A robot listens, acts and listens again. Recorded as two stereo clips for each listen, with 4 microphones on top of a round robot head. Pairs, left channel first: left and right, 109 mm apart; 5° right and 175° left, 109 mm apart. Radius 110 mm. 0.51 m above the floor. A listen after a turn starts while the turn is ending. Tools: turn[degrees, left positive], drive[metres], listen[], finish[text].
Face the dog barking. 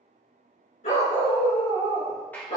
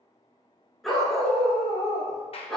Thought: The dog barking: 80° left.
Action: turn[80]
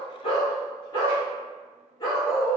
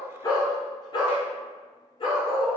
Thought: The dog barking is now 35° left.
Action: turn[35]
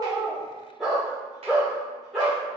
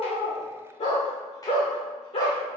Action: finish[Found it: a dog barking, straight ahead.]